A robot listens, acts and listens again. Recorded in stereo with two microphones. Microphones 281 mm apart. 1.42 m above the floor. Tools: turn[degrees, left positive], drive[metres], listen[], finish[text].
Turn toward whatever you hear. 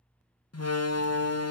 Thought: The door slam: about 70° left or 110° left.
Action: turn[70]
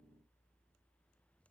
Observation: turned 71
Action: listen[]
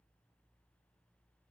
Action: finish[I heard a door slam, but can't make it out now. It was about straight ahead or 40° left.]